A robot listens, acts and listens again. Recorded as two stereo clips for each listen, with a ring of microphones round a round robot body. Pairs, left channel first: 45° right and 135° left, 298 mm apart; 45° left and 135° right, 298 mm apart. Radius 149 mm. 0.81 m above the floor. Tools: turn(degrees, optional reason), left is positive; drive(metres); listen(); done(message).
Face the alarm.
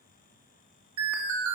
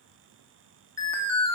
turn(degrees=125, reason="The alarm: 125° left.")
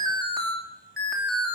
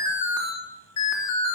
turn(degrees=45, reason="The alarm is now 45° left.")
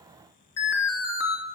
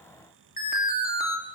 turn(degrees=-15, reason="The alarm is now 15° right.")
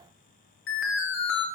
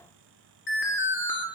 done("Found it: an alarm, straight ahead, 2 to 4 m away.")